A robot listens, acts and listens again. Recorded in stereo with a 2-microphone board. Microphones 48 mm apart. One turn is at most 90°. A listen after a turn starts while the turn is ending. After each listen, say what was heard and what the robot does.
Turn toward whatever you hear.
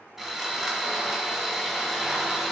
Turn 30° left.
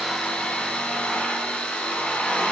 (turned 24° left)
So it is at 155° left. Turn 90° left.
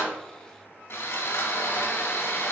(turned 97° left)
The sawing is now 60° left. Turn 60° left.
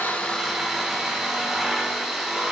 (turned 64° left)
Found it: sawing, straight ahead, 1 to 2 m away.